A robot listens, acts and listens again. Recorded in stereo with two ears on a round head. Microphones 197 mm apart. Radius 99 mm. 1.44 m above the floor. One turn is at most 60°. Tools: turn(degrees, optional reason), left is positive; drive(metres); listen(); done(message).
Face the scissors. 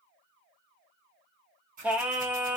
turn(degrees=-40, reason="The scissors: about 40° right or 140° right.")
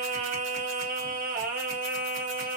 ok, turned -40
listen()
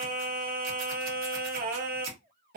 turn(degrees=-60, reason="So it is at 95° right.")
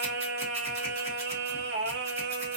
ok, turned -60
turn(degrees=-35, reason="Nothing new. It was at 35° right.")
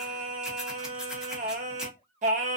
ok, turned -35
listen()
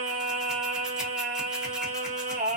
done("I heard scissors from this way, but can't make it out now.")